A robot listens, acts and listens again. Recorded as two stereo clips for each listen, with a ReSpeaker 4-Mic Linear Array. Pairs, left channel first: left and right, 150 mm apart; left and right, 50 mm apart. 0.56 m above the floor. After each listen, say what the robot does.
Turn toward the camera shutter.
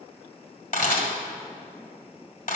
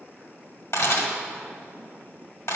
Turn 65° left.
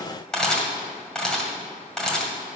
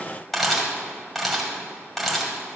Found it: a camera shutter, straight ahead.